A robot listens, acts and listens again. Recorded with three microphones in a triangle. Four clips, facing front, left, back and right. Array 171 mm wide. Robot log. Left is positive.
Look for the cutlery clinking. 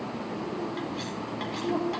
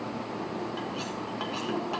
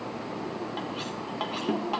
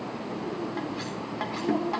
note: The cutlery clinking: 140° right.
cmd yaw -140
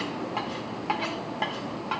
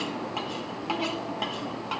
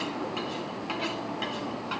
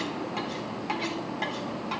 note: The cutlery clinking is now 10° left.
cmd yaw +10
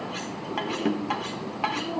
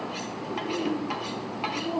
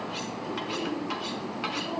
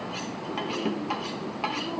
end: Found it: cutlery clinking, straight ahead, 1 to 2 m away.